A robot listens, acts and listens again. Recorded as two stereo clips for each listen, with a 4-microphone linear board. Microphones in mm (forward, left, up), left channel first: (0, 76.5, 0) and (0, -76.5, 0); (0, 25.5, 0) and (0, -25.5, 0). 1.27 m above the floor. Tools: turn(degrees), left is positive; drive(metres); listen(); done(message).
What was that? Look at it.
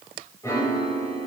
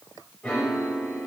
turn(degrees=20)
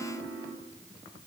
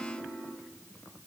done("Found it: a piano, straight ahead.")